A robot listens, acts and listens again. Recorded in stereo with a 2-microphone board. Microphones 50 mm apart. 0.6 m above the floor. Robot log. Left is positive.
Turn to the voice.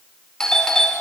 cmd idle
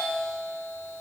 cmd idle
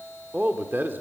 note: The man speaking: about 40° right or 140° right.
cmd yaw -40
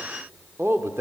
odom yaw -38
note: So it is at 95° right.
cmd yaw -95
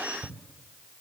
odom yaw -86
cmd idle
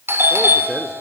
end: Found it: a man speaking, straight ahead.